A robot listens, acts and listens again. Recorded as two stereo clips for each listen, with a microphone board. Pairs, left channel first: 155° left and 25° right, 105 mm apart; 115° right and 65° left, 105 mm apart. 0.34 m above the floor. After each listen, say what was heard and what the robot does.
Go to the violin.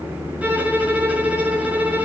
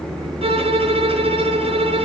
The violin: 55° left. Turn 55° left.
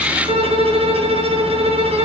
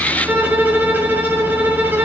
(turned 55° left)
Drive 1.0 m forward.
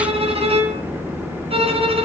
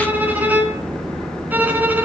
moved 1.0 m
Drive 1.0 m forward.
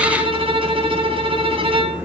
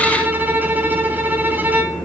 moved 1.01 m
Drive 1.0 m forward.
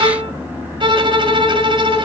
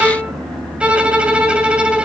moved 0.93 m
The violin is now 10° right. Turn 10° right.
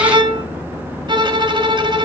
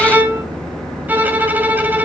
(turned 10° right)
Drive 1.0 m forward.
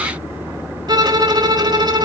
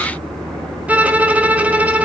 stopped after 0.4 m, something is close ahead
Arrived at the violin, straight ahead.